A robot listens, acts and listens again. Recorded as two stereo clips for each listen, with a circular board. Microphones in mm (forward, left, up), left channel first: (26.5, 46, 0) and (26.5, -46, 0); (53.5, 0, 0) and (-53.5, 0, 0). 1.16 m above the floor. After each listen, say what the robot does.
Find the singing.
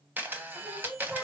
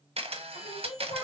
Found it: singing, straight ahead.